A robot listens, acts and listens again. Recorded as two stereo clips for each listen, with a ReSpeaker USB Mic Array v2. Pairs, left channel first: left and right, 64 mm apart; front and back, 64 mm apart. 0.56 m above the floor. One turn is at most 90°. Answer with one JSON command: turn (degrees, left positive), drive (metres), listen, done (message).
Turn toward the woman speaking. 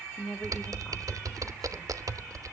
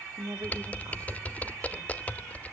{"turn": 90}
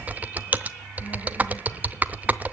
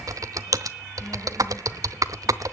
{"turn": 85}
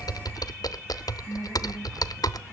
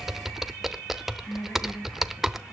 {"turn": -35}
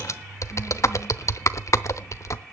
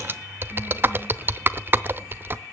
{"listen": true}
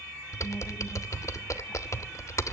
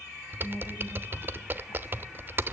{"listen": true}
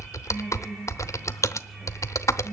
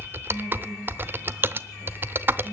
{"done": "Found it: a woman speaking, straight ahead, over 4 m away."}